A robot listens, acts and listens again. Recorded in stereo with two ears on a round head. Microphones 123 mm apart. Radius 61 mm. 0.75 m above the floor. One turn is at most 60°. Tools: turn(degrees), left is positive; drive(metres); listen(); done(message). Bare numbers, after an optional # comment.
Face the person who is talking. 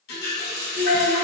# The child speaking: about 75° right or 105° right.
turn(-60)
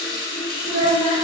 # So it is at 50° right.
turn(-50)
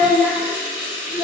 done("Facing the child speaking, 1 to 2 m away.")